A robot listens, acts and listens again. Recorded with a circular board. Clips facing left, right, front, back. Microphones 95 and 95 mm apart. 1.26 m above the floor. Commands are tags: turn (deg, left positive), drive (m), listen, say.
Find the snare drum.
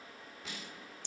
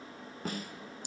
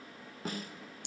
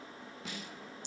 <turn deg="-45"/>
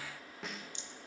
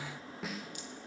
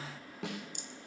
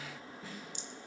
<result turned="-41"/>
<say>Found it: a snare drum, straight ahead.</say>